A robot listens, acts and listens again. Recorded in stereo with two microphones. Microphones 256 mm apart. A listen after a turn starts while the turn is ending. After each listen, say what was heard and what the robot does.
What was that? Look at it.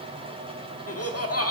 The laughter: about 65° left or 115° left. Turn 65° left.
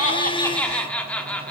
Facing the laughter, 1 to 2 m away.